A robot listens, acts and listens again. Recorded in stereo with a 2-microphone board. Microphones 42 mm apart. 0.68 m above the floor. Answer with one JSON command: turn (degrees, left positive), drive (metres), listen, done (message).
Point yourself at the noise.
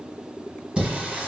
{"turn": -25}
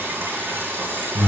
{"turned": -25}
{"turn": -130}
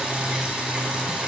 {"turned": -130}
{"turn": -20}
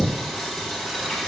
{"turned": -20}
{"done": "Facing the singing, 1 to 2 m away."}